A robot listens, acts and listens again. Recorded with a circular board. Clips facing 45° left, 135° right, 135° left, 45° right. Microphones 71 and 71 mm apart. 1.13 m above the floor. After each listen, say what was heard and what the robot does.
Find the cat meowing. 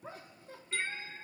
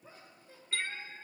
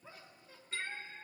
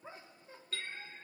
The cat meowing: 120° left. Turn 120° left.
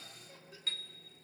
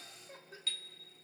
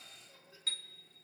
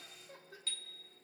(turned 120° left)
Keep listening.
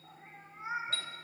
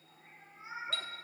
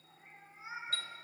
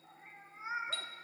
The cat meowing is now 15° left. Turn 15° left.
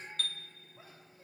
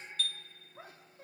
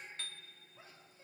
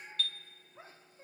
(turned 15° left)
Found it: a cat meowing, straight ahead, 2 to 4 m away.